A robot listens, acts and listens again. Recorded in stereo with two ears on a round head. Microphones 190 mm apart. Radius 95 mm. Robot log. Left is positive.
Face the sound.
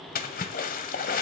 note: The splash: about 40° left or 140° left.
cmd yaw +40
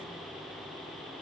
cmd idle
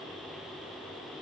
end: I heard a splash, but can't make it out now. It was about straight ahead or 100° left.